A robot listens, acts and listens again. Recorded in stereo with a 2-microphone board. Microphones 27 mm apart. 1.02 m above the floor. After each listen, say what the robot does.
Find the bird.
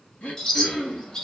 Turn 25° left.
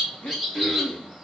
Facing the bird.